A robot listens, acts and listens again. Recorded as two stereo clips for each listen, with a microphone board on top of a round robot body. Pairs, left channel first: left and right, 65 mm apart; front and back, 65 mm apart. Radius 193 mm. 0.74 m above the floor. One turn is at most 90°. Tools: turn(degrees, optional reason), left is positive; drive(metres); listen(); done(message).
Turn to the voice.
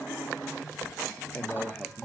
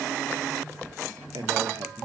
turn(degrees=90, reason="The man speaking: 170° left.")
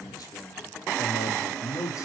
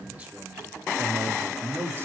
turn(degrees=90, reason="The man speaking is now 125° left.")
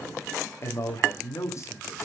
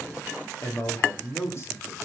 turn(degrees=45, reason="The man speaking is now 45° left.")
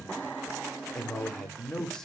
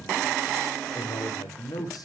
turn(degrees=10, reason="The man speaking is now 10° left.")
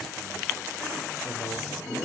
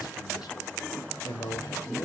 done("Found it: a man speaking, straight ahead, 2 to 4 m away.")